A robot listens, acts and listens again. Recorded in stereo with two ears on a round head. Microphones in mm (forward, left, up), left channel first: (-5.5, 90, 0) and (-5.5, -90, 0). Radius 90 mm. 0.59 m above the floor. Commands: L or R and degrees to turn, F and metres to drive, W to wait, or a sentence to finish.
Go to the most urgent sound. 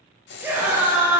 R30
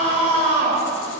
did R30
R135
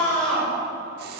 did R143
L10
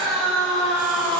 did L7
F1.0
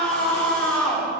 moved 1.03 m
F1.0
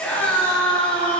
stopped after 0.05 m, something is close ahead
L10
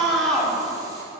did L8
Arrived at the scream, straight ahead.